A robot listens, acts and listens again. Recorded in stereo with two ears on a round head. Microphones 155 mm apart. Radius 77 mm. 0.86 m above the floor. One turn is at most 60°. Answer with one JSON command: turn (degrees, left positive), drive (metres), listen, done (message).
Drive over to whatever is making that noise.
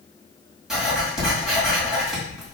{"turn": 30}
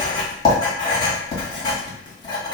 {"turn": 60}
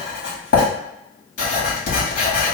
{"turn": 60}
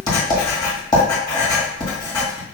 {"turn": 25}
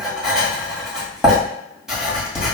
{"drive": 1.0}
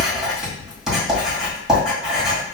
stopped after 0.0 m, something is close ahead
{"done": "Something is in my way. I am facing the writing but have not reached it."}